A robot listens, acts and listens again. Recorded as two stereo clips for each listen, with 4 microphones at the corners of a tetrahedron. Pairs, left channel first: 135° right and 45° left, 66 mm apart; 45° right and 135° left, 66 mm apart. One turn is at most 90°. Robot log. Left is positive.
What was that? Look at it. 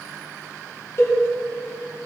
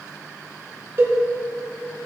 note: The cowbell: straight behind.
cmd yaw +90
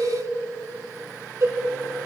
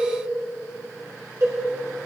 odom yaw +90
note: The cowbell is now 90° left.
cmd yaw +90
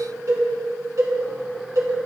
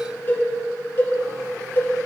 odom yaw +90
note: The cowbell is now 10° left.
cmd yaw +10
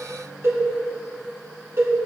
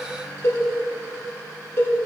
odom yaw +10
end: Found it: a cowbell, straight ahead, 2 to 4 m away.